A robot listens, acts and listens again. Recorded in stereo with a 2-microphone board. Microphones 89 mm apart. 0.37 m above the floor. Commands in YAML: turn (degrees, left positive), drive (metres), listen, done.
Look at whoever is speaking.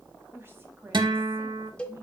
turn: -25
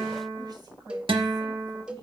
turn: -125
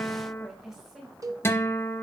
done: "Found it: a woman speaking, straight ahead, 2 to 4 m away."